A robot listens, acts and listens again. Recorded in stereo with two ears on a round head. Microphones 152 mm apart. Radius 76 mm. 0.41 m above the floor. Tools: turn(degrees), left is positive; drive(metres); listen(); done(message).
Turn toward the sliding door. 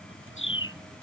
listen()
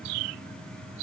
listen()
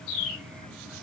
done("I can't make out a sliding door to turn to.")